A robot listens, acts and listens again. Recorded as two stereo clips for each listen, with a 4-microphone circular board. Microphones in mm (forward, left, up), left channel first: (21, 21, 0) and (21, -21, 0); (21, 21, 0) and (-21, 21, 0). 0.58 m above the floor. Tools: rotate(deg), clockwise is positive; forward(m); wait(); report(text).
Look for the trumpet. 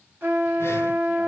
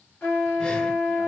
rotate(45)
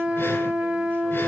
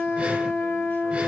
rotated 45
report("Facing the trumpet.")